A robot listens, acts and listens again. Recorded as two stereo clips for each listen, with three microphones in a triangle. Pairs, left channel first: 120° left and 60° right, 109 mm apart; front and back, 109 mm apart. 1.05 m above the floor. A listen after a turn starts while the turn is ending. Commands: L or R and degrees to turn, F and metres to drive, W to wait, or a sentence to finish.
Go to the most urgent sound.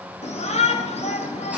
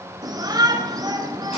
L125
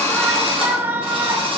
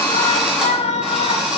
L10
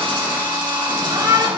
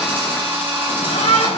F1.0
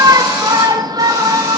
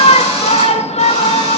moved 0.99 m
F1.0
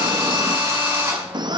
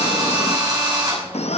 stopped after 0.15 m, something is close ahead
R15
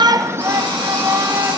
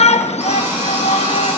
Arrived at the shout, straight ahead.